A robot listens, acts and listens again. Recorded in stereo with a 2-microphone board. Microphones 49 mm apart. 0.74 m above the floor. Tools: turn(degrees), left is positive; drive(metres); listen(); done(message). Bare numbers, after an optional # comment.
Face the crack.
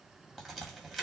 turn(-30)
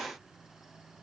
listen()
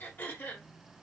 done("I heard a crack, but can't make it out now. It was about 25° left or 145° right.")